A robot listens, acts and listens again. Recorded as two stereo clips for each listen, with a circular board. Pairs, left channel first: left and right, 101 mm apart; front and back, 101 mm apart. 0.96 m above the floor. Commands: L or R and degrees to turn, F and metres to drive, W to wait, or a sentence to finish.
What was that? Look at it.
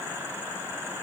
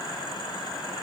W
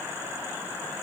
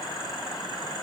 W
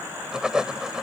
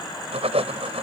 R175
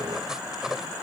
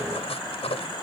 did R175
Facing the writing.